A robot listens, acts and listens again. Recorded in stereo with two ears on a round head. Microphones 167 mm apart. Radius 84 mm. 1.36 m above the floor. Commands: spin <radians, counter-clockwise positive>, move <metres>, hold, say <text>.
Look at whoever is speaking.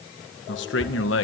spin 1.31
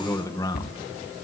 spin 0.35
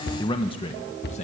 spin 0.70
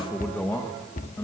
spin 0.26
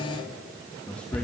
say Found it: a man speaking, straight ahead, 2 to 4 m away.